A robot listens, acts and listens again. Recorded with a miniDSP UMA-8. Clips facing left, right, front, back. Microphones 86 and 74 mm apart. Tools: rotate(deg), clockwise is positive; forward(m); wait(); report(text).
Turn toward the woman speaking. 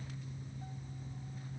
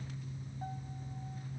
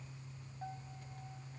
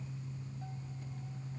wait()
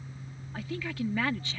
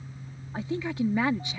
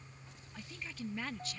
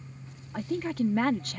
rotate(160)
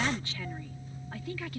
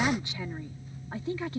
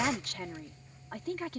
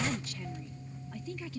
rotate(30)
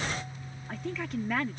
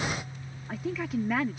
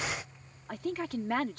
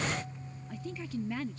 report("Found it: a woman speaking, straight ahead.")